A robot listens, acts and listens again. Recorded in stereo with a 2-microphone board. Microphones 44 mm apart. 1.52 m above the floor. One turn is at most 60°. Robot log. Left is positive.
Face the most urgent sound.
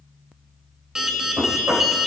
cmd yaw -30
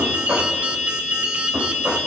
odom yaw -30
note: So it is at 135° right.
cmd yaw -60
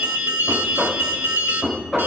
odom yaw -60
note: The alarm is now 75° right.
cmd yaw -60
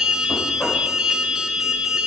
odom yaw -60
note: The alarm is now 10° right.
cmd yaw -10
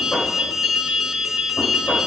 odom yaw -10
end: Facing the alarm.